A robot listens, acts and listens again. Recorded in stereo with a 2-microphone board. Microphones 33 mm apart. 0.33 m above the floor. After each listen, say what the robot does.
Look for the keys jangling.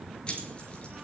Turn 35° left.
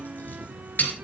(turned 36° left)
Turn 120° left.
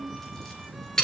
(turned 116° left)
Turn 15° left.
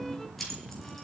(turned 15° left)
Found it: keys jangling, straight ahead.